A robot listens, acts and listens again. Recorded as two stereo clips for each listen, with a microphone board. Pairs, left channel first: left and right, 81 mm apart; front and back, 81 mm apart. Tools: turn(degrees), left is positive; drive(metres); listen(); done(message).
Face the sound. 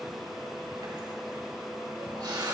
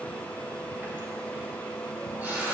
turn(degrees=-115)
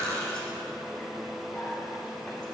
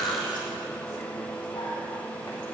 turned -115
turn(degrees=10)
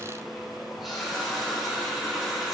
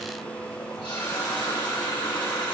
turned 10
done("Facing the running tap, 2 to 4 m away.")